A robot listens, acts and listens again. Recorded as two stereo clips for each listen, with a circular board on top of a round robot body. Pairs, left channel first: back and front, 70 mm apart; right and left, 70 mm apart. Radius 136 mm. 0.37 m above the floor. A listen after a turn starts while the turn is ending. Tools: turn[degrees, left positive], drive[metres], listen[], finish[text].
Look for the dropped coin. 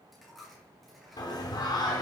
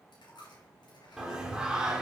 Thought: The dropped coin: 90° right.
Action: turn[-90]
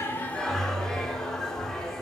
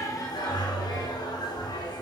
Action: finish[Facing where the dropped coin came from. I can't hear it now.]